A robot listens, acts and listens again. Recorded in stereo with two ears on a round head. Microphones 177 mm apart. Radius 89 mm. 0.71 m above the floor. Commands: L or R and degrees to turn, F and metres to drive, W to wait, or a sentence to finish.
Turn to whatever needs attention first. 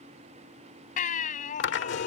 L45
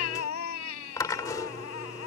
L90
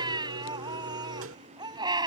R20
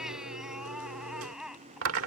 Facing the baby crying.